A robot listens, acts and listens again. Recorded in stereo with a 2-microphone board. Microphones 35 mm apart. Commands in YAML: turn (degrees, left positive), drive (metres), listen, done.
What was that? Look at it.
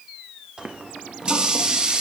turn: -20
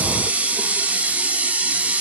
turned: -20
turn: -140
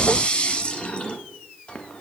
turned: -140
turn: 25
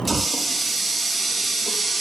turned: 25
done: "Facing the running tap, under 1 m away."